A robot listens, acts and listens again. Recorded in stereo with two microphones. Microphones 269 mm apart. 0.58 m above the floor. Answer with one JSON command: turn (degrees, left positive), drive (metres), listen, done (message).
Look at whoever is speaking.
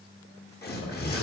{"turn": 65}
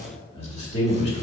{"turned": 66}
{"turn": 25}
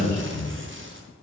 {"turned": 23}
{"turn": 10}
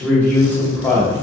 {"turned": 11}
{"turn": 10}
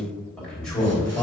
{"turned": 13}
{"done": "Found it: a man speaking, straight ahead, 2 to 4 m away."}